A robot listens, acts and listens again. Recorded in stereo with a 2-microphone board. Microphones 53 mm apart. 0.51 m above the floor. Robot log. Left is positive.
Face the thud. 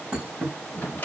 note: The thud: about 25° right or 155° right.
cmd yaw -25
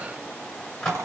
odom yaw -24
cmd idle
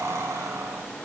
end: I heard a thud, but can't make it out now. It was about straight ahead or 135° right.